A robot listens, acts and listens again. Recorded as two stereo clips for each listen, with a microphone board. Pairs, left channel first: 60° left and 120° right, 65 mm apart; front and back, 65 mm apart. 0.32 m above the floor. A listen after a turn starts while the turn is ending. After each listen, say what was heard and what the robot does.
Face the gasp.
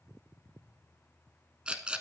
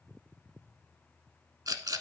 Keep listening.
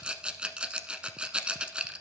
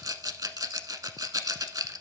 Keep listening.
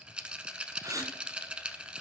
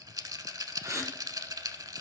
The gasp: 145° right. Turn 145° right.
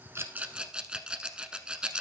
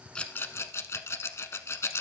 I heard a gasp from this way, but can't make it out now.